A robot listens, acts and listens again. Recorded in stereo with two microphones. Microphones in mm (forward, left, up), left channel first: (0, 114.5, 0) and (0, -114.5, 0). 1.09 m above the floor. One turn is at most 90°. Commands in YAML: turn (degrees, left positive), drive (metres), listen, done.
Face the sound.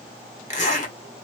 turn: 30
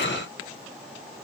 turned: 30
listen: true
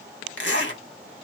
turn: 90
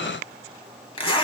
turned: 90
turn: 25
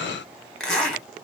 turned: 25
done: "Found it: a zipper, straight ahead, 1 to 2 m away."